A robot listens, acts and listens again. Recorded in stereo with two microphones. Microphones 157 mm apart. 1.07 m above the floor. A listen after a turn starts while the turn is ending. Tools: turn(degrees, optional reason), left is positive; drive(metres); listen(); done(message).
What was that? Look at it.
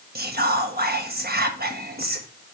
turn(degrees=-90)
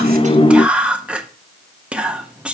done("Facing the whispering.")